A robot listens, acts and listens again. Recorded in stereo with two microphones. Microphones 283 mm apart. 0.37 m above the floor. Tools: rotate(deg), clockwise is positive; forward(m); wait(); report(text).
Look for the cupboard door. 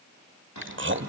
rotate(-90)
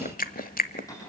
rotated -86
rotate(-10)
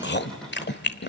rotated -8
wait()
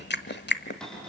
report("Facing the cupboard door.")